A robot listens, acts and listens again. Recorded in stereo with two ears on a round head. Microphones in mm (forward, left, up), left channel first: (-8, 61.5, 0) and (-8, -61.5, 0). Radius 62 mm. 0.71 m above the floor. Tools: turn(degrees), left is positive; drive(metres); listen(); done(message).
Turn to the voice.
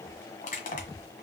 listen()
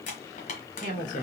turn(degrees=65)
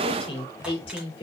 turn(degrees=45)
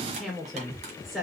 done("Found it: a woman speaking, straight ahead.")